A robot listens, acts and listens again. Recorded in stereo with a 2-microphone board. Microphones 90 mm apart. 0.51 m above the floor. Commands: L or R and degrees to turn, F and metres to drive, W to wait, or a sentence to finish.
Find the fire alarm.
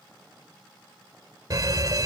R45
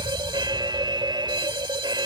R85
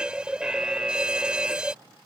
R10
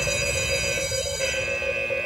Facing the fire alarm.